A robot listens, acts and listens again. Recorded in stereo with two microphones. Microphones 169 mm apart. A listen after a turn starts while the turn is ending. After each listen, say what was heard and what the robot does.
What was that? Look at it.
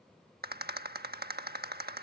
The rattle: about 65° right or 115° right. Turn 65° right.
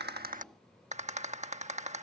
So it is at 45° right. Turn 45° right.
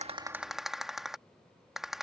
Found it: a rattle, straight ahead.